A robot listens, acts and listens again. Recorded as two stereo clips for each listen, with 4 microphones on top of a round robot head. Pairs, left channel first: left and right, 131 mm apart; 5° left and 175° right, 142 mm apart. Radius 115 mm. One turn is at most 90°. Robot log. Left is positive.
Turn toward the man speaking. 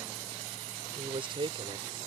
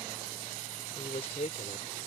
note: The man speaking: 45° right.
cmd yaw -45
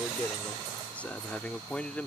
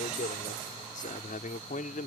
note: The man speaking is now 10° left.
cmd yaw +10
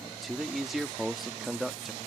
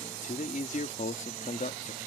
end: Found it: a man speaking, straight ahead.